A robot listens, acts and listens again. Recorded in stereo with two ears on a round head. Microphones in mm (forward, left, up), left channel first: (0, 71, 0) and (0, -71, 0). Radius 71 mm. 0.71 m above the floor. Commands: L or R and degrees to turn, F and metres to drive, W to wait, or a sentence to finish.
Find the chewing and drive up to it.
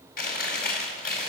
L65
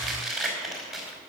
F1.0
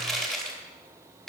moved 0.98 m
F1.0
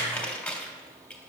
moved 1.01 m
L10
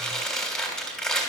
F1.0
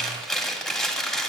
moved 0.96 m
F1.0
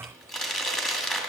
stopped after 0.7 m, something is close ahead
Arrived at the chewing, straight ahead.